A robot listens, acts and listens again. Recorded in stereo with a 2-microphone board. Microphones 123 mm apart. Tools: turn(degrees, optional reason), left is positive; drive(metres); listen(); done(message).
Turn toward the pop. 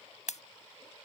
turn(degrees=70, reason="The pop: about 70° left or 110° left.")
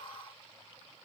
listen()
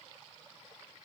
done("I heard a pop, but can't make it out now. It was about straight ahead or 40° left.")